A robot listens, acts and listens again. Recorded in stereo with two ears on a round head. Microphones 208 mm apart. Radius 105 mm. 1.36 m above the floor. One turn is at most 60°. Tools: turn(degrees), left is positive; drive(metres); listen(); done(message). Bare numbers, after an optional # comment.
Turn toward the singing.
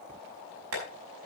listen()
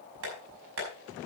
listen()
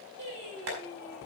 turn(-60)
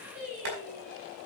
# So it is at 30° right.
turn(-30)
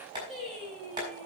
done("Found it: singing, straight ahead, over 4 m away.")